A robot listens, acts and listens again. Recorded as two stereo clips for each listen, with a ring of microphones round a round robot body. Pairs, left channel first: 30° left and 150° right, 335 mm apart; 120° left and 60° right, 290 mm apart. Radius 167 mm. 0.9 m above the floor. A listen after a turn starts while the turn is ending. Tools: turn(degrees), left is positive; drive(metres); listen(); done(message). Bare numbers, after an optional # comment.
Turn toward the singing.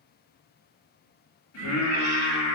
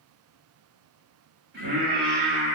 done("Facing the singing.")